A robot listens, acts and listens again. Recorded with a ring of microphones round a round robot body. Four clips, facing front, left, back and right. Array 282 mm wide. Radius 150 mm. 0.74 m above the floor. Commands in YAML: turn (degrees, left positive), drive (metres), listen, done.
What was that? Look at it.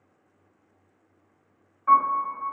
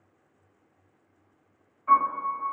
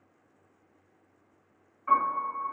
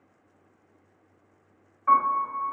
turn: -60
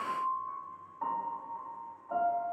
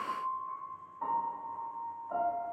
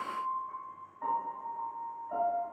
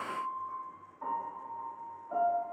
turn: 20
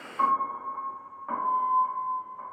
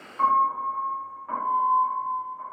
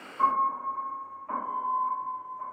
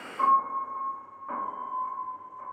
done: "Found it: a piano, straight ahead, 1 to 2 m away."